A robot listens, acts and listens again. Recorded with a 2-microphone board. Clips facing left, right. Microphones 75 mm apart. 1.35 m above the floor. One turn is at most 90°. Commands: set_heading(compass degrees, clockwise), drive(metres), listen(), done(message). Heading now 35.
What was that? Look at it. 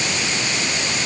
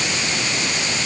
listen()
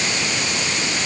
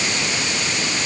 listen()
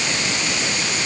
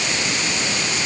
done("I can't make out anything.")